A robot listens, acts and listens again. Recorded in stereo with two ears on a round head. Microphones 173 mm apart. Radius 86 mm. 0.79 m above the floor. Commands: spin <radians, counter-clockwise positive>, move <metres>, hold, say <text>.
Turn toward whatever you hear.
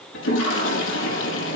spin 1.22
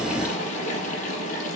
spin 0.70
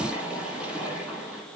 say Facing the toilet flushing, over 4 m away.